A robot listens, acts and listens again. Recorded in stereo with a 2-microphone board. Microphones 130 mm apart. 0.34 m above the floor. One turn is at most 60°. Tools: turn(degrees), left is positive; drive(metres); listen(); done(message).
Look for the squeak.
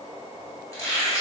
turn(degrees=25)
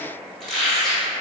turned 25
done("Facing the squeak, 1 to 2 m away.")